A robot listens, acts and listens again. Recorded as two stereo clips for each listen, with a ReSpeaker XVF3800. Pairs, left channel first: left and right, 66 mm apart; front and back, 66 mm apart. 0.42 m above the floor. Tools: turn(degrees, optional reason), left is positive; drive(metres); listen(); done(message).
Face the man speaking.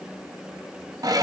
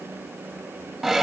listen()
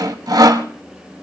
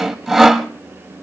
listen()
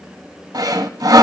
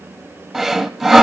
done("I can't make out a man speaking, only sawing.")